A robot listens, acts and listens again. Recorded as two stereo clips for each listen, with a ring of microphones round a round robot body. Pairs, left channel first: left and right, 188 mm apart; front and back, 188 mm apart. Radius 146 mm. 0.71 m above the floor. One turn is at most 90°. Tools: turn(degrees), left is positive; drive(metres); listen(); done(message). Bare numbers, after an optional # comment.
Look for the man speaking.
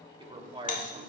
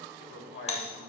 # The man speaking: 30° right.
turn(-30)
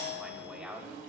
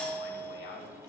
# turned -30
done("Facing the man speaking, 2 to 4 m away.")